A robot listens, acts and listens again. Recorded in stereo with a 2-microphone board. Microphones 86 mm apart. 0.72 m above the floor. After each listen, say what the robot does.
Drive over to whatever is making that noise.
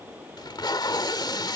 Turn 55° left.
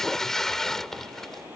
Drive 1.0 m forward.
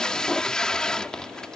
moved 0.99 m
Turn 10° left.
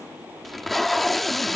Drive 1.0 m forward.
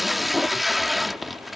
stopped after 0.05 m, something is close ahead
I am next to the tape being pulled.